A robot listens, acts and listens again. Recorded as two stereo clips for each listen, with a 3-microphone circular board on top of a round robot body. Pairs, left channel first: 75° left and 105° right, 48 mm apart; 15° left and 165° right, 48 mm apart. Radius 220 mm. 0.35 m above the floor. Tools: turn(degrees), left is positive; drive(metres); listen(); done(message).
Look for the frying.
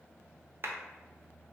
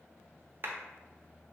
listen()
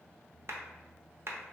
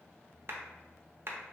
listen()
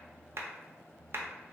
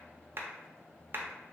done("I can't make out frying, only a clap.")